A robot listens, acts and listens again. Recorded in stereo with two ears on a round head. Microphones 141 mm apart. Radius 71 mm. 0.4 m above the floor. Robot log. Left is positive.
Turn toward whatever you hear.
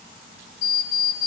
note: The alarm clock: about 75° left or 105° left.
cmd yaw +75
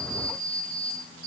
note: So it is at 30° left.
cmd yaw +30
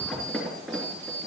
end: Facing the alarm clock.